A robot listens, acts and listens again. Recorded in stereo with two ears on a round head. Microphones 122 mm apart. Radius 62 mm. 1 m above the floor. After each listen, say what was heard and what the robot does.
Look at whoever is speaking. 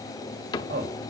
Turn 90° right.
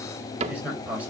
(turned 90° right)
So it is at 10° right. Turn 10° right.
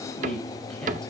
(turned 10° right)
Found it: a man speaking, straight ahead.